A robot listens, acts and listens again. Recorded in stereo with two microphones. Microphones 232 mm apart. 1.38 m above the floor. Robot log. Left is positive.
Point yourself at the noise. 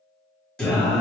cmd yaw +30
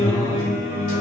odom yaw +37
note: So it is at 145° left.
cmd yaw +145
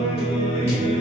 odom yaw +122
note: The singing is now 25° left.
cmd yaw +25
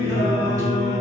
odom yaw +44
note: The singing is now 15° right.
cmd yaw -15
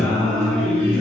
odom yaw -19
end: Facing the singing.